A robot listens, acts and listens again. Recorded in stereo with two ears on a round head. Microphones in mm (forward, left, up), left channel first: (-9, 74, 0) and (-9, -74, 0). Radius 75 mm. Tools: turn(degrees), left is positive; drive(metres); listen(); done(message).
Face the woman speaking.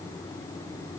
listen()
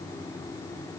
listen()
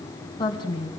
turn(degrees=30)
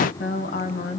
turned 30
turn(degrees=125)
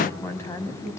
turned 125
turn(degrees=15)
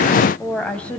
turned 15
done("Found it: a woman speaking, straight ahead, 2 to 4 m away.")